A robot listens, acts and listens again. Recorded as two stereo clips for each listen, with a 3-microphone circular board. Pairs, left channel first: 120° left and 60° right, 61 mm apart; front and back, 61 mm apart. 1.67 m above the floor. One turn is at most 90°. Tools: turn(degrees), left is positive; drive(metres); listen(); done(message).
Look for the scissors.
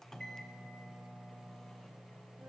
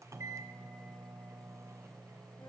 listen()
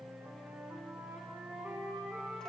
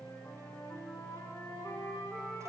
listen()
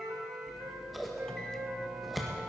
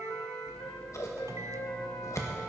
turn(degrees=30)
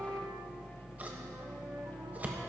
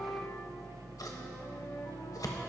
done("Found it: scissors, straight ahead.")